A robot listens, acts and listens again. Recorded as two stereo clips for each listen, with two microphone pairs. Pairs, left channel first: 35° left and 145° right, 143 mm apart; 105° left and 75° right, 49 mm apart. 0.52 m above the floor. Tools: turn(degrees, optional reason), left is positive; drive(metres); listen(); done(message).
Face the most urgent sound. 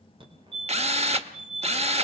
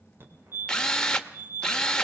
turn(degrees=-100, reason="The fire alarm: 100° right.")
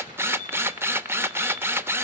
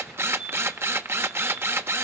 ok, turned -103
done("Found it: a fire alarm, straight ahead.")